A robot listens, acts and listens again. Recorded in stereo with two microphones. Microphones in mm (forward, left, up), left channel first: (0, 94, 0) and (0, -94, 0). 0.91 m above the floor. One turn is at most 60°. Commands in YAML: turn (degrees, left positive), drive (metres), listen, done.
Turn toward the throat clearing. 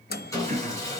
turn: -40
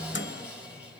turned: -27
listen: true
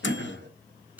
turn: -60
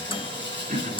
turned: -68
turn: -45
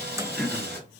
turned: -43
done: "Facing the throat clearing."